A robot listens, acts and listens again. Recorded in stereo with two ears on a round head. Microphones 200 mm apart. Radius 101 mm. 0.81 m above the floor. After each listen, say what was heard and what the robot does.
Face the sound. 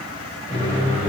The microwave: about 25° right or 155° right. Turn 25° right.
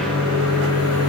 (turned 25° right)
So it is at 130° right. Turn 130° right.
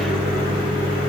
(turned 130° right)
Facing the microwave.